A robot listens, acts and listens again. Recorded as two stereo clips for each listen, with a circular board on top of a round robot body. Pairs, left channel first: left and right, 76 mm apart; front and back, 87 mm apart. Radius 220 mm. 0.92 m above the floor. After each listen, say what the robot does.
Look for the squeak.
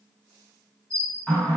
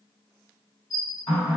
Turn 40° right.
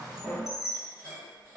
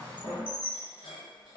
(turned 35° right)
Found it: a squeak, straight ahead.